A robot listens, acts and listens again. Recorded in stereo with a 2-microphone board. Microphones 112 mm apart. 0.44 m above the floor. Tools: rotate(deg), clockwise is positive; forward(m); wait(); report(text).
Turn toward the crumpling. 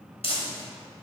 rotate(-65)
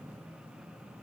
wait()
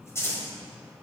rotate(-30)
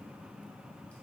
wait()
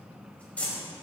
rotate(-15)
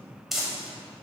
report("Facing the crumpling, 1 to 2 m away.")